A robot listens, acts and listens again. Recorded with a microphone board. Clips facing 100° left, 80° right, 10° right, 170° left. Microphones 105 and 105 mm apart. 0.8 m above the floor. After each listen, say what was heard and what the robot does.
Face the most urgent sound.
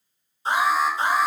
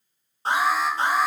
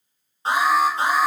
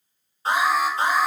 The alarm: 70° right. Turn 70° right.
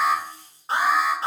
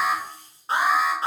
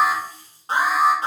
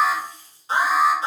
The alarm is now 15° left. Turn 15° left.
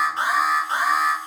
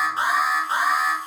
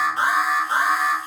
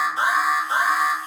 The alarm is now 10° left. Turn 10° left.
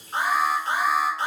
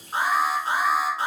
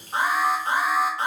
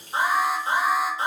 Found it: an alarm, straight ahead.